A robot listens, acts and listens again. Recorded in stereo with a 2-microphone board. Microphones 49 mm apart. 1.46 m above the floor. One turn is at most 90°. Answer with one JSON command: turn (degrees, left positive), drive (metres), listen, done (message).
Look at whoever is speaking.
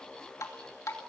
{"listen": true}
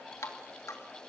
{"listen": true}
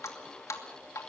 {"done": "I can't make out anyone speaking to turn to."}